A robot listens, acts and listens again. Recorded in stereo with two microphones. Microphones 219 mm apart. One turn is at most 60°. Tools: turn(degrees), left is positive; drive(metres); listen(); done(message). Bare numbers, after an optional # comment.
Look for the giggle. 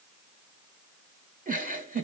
# The giggle: about 40° right or 140° right.
turn(-40)
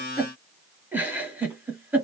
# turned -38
# So it is at 10° right.
turn(-10)
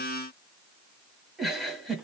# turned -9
done("Found it: a giggle, straight ahead, 1 to 2 m away.")